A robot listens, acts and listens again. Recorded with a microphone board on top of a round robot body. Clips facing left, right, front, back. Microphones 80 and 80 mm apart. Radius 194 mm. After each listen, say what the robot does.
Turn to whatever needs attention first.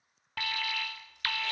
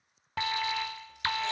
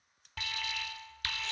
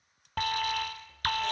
Turn 155° right.
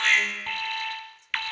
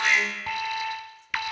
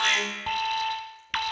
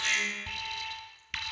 Turn 15° right.
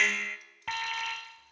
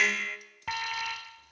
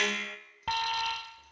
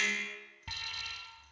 Facing the alarm.